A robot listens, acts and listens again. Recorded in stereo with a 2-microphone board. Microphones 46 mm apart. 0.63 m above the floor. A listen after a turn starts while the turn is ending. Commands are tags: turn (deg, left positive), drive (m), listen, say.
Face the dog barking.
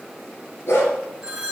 <turn deg="60"/>
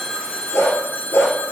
<turn deg="65"/>
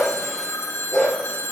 <turn deg="10"/>
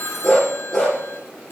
<say>Found it: a dog barking, straight ahead, over 4 m away.</say>